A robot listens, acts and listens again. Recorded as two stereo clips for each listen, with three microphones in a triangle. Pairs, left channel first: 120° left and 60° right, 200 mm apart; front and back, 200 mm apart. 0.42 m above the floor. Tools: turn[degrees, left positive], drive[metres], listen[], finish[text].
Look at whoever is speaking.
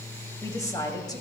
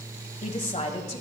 Thought: The woman speaking: 50° left.
Action: turn[50]
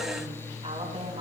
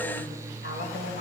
Action: finish[Facing the woman speaking, 2 to 4 m away.]